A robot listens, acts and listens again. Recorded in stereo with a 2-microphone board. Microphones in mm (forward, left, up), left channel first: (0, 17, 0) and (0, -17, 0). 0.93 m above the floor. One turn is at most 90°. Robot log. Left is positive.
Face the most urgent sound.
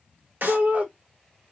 note: The shout: about 45° right or 135° right.
cmd yaw -45
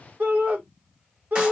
note: So it is at 80° right.
cmd yaw -80
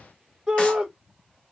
note: The shout is now 15° right.
cmd yaw -15
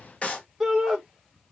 end: Facing the shout, 1 to 2 m away.